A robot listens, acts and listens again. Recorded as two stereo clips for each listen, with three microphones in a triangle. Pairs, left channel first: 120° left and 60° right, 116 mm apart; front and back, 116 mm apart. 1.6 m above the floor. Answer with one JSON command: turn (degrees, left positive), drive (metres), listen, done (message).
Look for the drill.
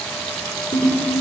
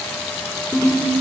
{"listen": true}
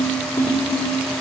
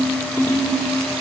{"listen": true}
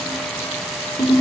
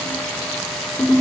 {"done": "I can't make out a drill to turn to."}